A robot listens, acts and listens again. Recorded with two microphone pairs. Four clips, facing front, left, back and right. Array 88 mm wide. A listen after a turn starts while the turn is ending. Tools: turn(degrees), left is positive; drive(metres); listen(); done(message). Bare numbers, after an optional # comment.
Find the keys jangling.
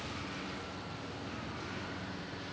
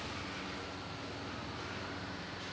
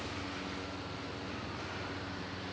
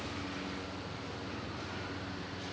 listen()
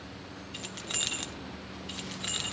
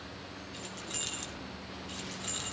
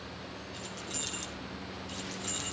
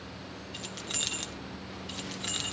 # The keys jangling: 45° right.
turn(-45)
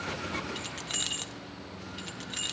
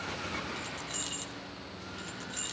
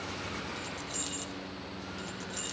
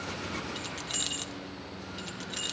# The keys jangling is now 35° right.
turn(-35)
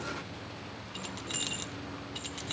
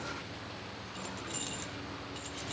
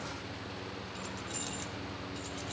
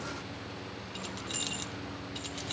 # The keys jangling is now 20° right.
turn(-20)
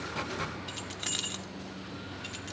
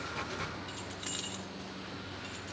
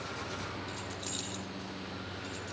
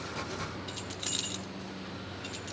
done("Facing the keys jangling.")